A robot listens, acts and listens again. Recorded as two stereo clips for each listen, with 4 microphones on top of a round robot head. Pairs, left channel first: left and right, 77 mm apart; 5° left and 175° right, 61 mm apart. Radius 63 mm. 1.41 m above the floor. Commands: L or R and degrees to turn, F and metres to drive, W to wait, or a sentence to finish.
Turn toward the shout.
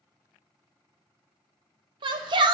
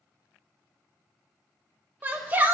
R110
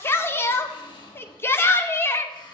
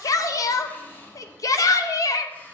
L30
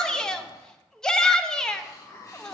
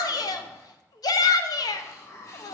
L10
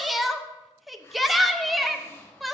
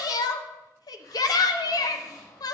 Facing the shout, under 1 m away.